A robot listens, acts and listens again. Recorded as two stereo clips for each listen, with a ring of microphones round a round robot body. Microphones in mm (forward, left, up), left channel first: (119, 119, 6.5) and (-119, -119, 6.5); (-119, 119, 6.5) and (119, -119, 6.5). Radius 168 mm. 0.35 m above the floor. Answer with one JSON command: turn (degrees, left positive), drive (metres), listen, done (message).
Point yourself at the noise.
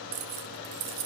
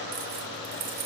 {"turn": -105}
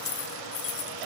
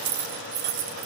{"done": "Facing the keys jangling, 1 to 2 m away."}